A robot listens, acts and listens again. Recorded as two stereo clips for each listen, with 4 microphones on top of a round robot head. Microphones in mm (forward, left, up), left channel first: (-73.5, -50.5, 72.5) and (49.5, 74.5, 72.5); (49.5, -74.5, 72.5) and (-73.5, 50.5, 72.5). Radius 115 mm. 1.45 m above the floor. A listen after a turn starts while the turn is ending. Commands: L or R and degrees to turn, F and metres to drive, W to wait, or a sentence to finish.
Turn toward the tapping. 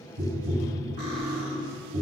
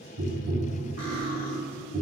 L95
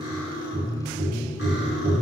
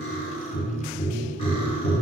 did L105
R10
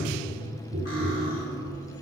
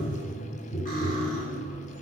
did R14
Found it: tapping, straight ahead.